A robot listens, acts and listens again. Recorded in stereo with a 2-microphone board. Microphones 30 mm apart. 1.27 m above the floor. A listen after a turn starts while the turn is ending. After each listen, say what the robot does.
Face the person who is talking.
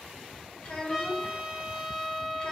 Turn 35° left.
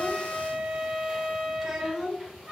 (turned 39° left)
Facing the child speaking.